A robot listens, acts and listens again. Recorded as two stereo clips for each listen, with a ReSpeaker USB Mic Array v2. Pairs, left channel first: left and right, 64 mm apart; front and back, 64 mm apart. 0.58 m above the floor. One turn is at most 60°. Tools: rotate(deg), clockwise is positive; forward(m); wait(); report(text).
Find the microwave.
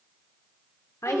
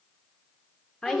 wait()
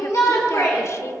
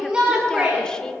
wait()
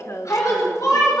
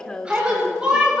report("I can't make out a microwave, only a shout and a woman speaking.")